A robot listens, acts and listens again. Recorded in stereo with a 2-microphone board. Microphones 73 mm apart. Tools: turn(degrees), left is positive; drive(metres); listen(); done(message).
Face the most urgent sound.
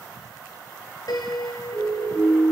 turn(degrees=-25)
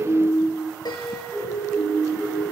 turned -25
done("Facing the siren, over 4 m away.")